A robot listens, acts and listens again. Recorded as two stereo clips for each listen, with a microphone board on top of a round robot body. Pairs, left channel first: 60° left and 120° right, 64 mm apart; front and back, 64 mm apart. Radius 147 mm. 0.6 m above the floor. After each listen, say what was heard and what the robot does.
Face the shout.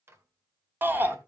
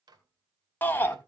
The shout: 60° right. Turn 60° right.
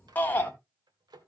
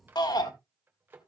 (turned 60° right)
Found it: a shout, straight ahead.